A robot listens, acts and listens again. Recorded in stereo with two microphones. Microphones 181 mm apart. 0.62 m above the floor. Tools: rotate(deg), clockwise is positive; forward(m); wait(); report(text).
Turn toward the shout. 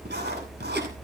wait()
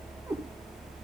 wait()
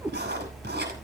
report("I can't make out a shout to turn to.")